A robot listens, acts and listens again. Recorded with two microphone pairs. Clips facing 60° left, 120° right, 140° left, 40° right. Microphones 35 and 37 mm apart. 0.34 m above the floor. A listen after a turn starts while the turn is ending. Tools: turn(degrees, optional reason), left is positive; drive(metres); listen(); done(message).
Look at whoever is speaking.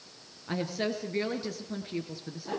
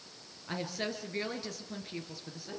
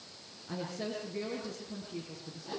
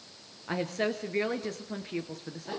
turn(degrees=-25, reason="The woman speaking: 25° right.")
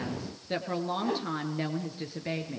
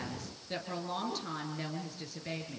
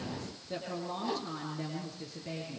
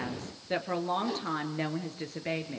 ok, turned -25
turn(degrees=-10, reason="The woman speaking is now 10° right.")
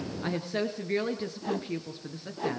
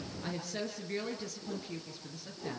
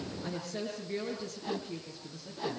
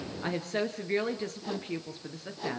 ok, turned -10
done("Facing the woman speaking, over 4 m away.")